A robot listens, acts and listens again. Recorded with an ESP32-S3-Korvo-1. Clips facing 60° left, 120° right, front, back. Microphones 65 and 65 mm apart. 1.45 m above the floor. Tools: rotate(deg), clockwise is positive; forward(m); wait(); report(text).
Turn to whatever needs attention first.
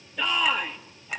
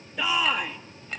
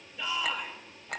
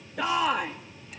rotate(-155)
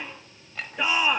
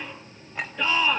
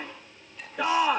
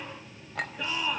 rotate(15)
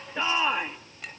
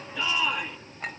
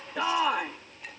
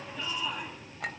report("Facing the shout, 2 to 4 m away.")